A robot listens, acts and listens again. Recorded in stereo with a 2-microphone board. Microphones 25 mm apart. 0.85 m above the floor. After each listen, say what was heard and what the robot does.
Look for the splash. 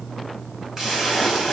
The splash: about 20° right or 160° right. Turn 20° right.
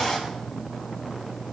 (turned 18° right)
Found it: a splash, straight ahead.